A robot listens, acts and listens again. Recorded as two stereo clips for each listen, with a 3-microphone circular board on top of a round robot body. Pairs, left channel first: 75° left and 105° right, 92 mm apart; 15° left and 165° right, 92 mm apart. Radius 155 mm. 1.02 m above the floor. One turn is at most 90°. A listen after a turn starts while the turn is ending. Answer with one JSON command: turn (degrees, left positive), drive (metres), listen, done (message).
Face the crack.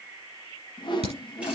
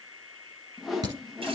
{"turn": -90}
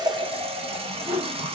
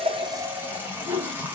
{"turn": -25}
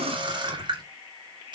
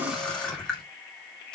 {"done": "Facing where the crack came from. I can't hear it now."}